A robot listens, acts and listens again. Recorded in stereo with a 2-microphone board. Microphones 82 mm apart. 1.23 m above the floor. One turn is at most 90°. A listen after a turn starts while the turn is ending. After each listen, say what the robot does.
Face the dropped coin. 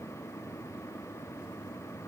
Keep listening.
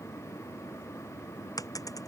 Turn 45° left.
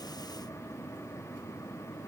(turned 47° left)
Keep listening.
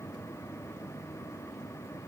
I heard a dropped coin, but can't make it out now. It was about straight ahead or 85° left.